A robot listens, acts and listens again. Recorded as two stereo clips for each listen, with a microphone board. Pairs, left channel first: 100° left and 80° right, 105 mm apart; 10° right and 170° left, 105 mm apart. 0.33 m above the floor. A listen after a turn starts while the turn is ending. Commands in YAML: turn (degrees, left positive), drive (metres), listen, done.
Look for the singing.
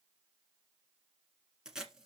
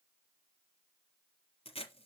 listen: true
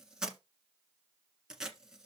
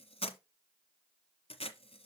listen: true
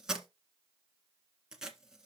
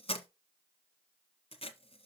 done: "I can't make out singing, only tape being pulled."